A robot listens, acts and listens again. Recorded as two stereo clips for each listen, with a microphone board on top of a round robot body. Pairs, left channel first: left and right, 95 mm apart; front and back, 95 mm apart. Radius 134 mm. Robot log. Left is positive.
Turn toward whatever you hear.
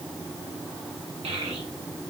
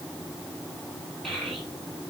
note: The child speaking: 90° right.
cmd yaw -90
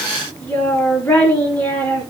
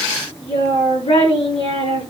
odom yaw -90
note: The child speaking is now 15° left.
cmd yaw +15
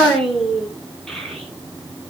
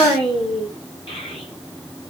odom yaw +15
end: Facing the child speaking, over 4 m away.